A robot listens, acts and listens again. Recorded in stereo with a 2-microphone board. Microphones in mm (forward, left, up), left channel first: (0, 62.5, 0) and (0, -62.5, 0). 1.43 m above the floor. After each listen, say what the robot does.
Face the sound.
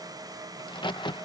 Turn 40° left.
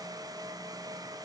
Keep listening.
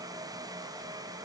I heard a crack, but can't make it out now. It was about straight ahead or 100° left.